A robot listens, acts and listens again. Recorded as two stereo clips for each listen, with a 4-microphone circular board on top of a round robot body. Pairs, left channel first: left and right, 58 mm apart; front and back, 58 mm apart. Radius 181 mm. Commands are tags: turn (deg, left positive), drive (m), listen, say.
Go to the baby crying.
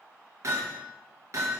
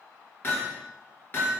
<listen/>
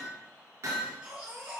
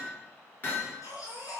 <turn deg="-20"/>
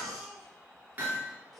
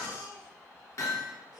<drive m="1.0"/>
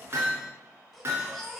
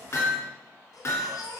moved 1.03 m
<drive m="1.0"/>
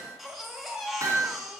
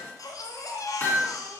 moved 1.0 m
<drive m="1.0"/>
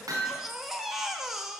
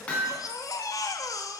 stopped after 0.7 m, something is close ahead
<say>Arrived at the baby crying, straight ahead.</say>